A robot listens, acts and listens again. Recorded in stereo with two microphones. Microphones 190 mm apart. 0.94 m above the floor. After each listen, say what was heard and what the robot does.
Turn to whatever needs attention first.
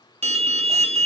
The alarm: about 35° right or 145° right. Turn 35° right.
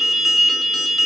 Found it: an alarm, straight ahead, 1 to 2 m away.